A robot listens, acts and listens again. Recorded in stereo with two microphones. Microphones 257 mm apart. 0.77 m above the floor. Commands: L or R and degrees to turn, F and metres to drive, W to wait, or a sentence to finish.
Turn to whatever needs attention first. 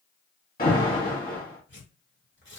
L35
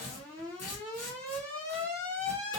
Found it: an alarm, straight ahead.